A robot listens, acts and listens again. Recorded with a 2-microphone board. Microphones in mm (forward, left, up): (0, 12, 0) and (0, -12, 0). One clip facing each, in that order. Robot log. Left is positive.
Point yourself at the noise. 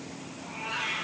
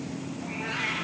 cmd yaw -90
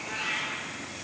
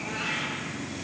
note: So it is at 10° left.
cmd yaw +10
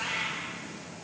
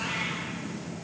note: The cat meowing is now 15° left.
cmd yaw +15
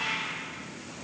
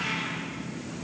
end: Facing the cat meowing, 2 to 4 m away.